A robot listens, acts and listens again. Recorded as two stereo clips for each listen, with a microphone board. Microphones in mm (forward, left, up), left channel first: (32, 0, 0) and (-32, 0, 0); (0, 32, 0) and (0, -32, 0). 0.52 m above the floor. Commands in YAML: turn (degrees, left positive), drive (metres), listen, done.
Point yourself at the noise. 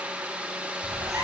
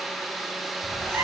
turn: -145
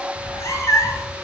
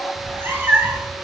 turn: -30
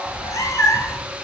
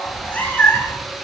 turn: 35
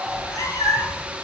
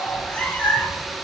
turn: 25
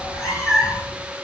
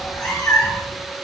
turn: 10
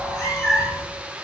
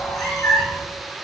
done: "Facing the cat meowing."